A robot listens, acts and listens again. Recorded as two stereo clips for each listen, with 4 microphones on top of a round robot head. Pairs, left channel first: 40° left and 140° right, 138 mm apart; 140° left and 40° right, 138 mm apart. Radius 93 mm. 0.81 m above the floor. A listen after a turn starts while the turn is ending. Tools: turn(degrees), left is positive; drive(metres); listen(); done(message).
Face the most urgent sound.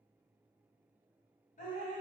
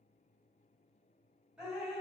listen()
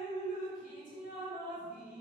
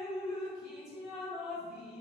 listen()
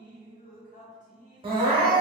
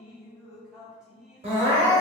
turn(degrees=-85)
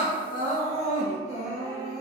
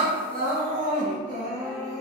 done("Facing the crying.")